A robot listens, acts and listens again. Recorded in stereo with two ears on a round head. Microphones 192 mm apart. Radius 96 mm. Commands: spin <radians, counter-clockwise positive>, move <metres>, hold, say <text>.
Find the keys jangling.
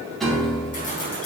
spin 0.70
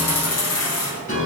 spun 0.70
spin 1.66
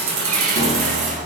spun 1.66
spin -0.61
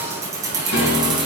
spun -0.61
spin -0.44
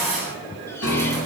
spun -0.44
say Facing the keys jangling, 2 to 4 m away.